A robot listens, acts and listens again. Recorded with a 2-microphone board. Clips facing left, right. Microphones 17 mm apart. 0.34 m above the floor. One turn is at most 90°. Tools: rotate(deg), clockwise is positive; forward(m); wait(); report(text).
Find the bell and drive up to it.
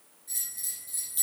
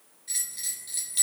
rotate(40)
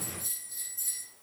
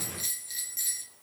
rotate(90)
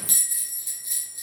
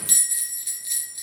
rotate(25)
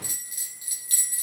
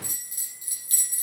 rotate(-15)
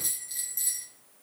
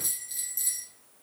forward(1.0)
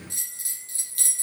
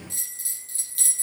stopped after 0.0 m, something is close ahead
report("Blocked. The bell is further on, straight ahead.")